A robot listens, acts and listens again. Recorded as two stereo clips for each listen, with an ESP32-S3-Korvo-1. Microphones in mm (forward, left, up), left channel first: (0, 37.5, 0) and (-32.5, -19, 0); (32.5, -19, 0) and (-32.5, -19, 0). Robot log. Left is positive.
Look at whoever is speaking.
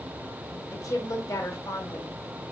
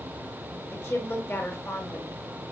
note: The woman speaking: 45° left.
cmd yaw +45
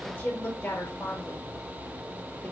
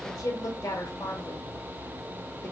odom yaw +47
end: Facing the woman speaking.